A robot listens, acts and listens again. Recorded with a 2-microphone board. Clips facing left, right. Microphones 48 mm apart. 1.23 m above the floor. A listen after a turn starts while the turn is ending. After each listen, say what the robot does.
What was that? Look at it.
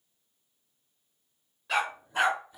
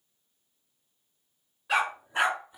Turn 20° right.
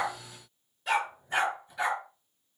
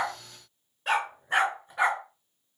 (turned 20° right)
Turn 135° right.
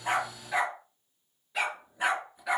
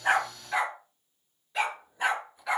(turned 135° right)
Found it: a dog barking, straight ahead.